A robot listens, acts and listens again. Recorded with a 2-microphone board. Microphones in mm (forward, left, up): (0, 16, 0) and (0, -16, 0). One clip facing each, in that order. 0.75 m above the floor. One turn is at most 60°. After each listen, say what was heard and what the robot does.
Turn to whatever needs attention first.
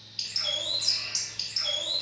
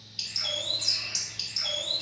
Keep listening.
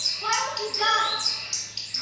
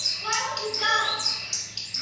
The shout: about 70° left or 110° left. Turn 60° left.
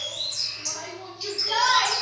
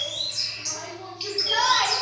So it is at 25° left. Turn 25° left.
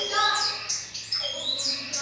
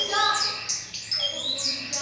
Found it: a shout, straight ahead, 1 to 2 m away.